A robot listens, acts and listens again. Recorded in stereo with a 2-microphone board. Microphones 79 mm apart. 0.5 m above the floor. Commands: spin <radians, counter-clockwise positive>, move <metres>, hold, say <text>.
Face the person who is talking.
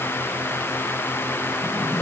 hold
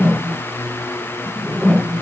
hold
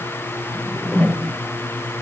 say I can't make out anyone speaking, only a whoosh.